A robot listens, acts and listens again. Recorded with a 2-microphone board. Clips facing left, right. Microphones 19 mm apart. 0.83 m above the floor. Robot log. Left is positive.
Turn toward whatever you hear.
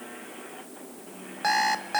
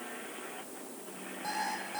cmd yaw +90
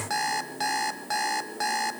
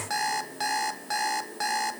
end: Facing the alarm clock, 1 to 2 m away.